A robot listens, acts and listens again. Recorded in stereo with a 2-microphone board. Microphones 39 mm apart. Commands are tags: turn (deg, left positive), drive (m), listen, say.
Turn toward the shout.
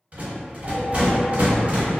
<listen/>
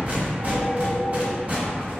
<listen/>
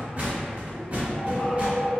<say>I can't make out a shout, only a phone ringing and a rattle.</say>